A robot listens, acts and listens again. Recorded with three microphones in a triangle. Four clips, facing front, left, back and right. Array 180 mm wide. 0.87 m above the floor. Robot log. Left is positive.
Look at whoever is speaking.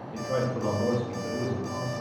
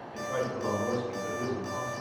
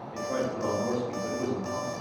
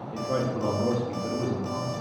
note: The man speaking: 120° right.
cmd yaw -120
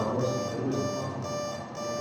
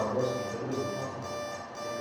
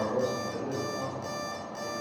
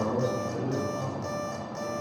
note: The man speaking is now 25° right.
cmd yaw -25
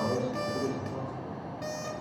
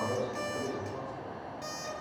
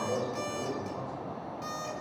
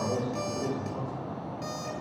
note: The man speaking is now 10° right.
cmd yaw -10
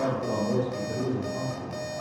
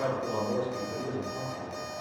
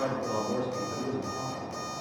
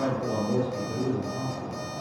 note: The man speaking is now 10° right.
cmd yaw -10
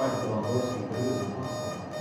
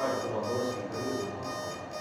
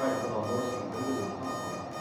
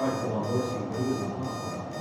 end: Found it: a man speaking, straight ahead.